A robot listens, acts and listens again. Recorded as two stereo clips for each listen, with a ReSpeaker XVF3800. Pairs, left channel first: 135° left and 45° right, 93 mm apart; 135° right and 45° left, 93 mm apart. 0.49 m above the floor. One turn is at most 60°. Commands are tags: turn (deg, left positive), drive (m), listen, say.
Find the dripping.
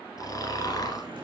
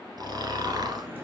<turn deg="-20"/>
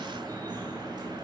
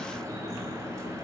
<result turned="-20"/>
<turn deg="-10"/>
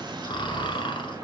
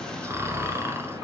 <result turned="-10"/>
<say>Found it: dripping, straight ahead, 2 to 4 m away.</say>